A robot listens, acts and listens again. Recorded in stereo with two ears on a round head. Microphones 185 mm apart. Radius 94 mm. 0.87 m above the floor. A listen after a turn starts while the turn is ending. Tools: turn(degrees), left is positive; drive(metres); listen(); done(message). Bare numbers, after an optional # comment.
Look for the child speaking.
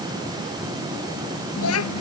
# The child speaking: about 70° left or 110° left.
turn(70)
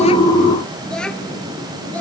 done("Facing the child speaking.")